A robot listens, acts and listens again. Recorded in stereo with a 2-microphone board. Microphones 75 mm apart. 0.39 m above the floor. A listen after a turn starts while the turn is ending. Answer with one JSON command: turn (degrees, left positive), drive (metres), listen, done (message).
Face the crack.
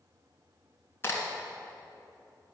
{"turn": 30}
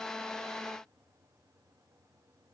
{"listen": true}
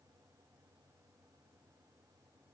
{"done": "I heard a crack, but can't make it out now. It was about straight ahead or 120° left."}